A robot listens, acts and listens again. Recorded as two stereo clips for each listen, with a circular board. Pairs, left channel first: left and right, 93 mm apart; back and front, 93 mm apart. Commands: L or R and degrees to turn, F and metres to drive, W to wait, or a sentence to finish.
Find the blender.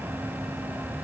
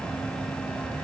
W
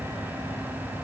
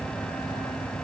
W
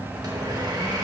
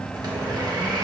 R40
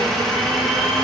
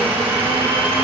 Found it: a blender, straight ahead, 1 to 2 m away.